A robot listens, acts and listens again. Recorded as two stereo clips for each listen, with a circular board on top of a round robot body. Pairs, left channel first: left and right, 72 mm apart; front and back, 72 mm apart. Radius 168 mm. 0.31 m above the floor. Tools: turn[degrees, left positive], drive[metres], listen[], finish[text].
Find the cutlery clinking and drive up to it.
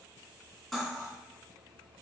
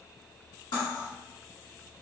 Action: drive[1.0]
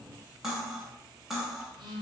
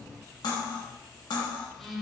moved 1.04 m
Action: drive[1.0]
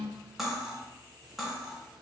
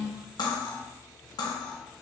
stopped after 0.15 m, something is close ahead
Action: finish[Arrived at the cutlery clinking, straight ahead.]